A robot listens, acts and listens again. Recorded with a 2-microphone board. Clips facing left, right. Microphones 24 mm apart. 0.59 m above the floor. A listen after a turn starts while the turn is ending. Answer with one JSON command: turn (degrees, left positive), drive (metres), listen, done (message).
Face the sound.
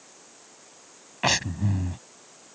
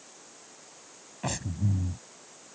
{"turn": 70}
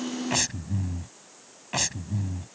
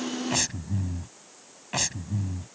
{"done": "Facing the breathing."}